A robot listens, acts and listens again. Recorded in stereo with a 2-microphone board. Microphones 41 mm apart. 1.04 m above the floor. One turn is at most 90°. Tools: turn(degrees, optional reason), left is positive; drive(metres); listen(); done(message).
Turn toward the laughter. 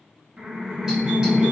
turn(degrees=-25, reason="The laughter: about 25° right or 155° right.")
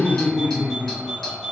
turn(degrees=-90, reason="So it is at 130° right.")
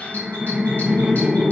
turn(degrees=-30, reason="The laughter is now 30° right.")
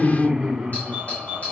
turn(degrees=-15, reason="The laughter is now 15° right.")
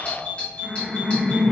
done("Found it: laughter, straight ahead, under 1 m away.")